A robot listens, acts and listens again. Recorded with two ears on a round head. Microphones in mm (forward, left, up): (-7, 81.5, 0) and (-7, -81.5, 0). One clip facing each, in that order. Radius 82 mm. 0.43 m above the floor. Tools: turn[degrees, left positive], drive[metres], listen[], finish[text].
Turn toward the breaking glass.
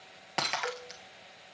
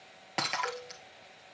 Action: turn[30]
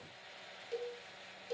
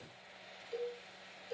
Action: listen[]
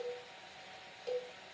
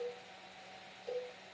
Action: finish[I heard breaking glass, but can't make it out now. It was about 30° right or 150° left.]